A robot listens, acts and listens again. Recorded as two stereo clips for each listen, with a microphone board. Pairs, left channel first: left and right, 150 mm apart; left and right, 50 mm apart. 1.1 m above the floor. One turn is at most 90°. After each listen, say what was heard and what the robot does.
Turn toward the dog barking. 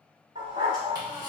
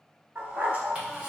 The dog barking: about 40° right or 140° right. Turn 40° right.
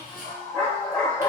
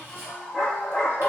So it is at 10° left. Turn 10° left.
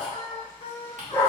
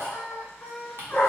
The dog barking is now 20° left. Turn 20° left.
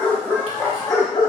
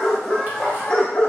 The dog barking is now 25° left. Turn 25° left.
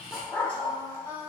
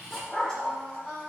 The dog barking is now 20° left. Turn 20° left.
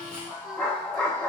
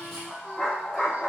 The dog barking is now 10° left. Turn 10° left.
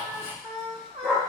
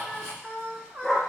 Found it: a dog barking, straight ahead, 1 to 2 m away.